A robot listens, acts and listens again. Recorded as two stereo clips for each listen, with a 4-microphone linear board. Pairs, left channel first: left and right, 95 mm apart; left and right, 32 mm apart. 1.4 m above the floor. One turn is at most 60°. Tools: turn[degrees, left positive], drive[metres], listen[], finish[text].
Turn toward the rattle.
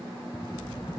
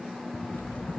Thought: The rattle: about 50° left or 130° left.
Action: turn[50]
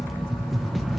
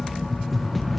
Action: finish[Facing the rattle, 1 to 2 m away.]